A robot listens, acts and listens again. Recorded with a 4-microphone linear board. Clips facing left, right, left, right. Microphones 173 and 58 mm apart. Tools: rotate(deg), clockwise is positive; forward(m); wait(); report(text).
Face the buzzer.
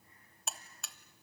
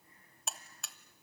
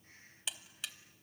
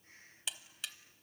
rotate(-30)
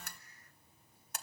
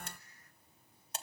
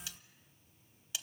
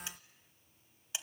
rotate(30)
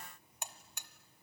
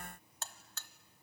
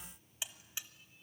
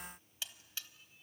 rotate(-15)
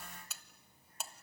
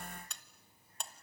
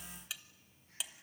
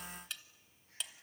report("Found it: a buzzer, straight ahead.")